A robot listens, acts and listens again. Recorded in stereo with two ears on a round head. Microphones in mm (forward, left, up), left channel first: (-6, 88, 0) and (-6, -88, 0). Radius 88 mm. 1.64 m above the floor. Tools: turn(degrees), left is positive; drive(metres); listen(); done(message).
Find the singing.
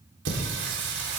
turn(degrees=-55)
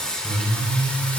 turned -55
done("Facing the singing.")